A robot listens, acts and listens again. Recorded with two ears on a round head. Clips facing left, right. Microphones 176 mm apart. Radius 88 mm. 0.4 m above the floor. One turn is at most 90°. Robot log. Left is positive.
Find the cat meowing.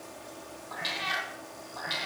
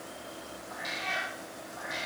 cmd yaw +90
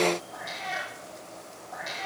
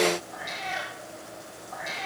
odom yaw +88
note: So it is at 15° left.
cmd yaw +15
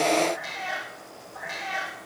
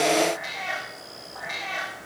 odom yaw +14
note: The cat meowing is now 10° left.
cmd yaw +10
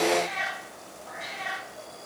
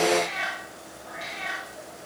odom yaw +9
end: Found it: a cat meowing, straight ahead.